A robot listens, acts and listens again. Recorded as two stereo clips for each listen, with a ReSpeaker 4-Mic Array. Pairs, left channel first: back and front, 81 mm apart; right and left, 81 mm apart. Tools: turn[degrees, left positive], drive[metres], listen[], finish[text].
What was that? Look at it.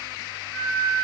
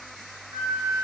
Thought: The flute: 105° left.
Action: turn[105]
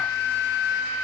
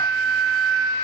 Thought: The flute is now 10° left.
Action: turn[10]
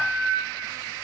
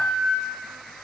Action: finish[Facing the flute.]